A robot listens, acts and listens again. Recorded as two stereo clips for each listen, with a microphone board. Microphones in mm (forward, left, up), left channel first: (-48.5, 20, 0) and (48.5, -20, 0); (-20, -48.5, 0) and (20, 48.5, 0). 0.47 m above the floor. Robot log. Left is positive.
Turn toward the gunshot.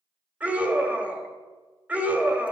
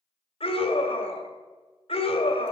cmd idle
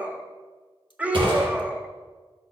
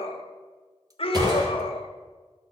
note: The gunshot: 15° left.
cmd yaw +15
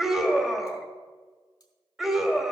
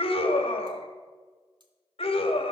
end: Facing where the gunshot came from. I can't hear it now.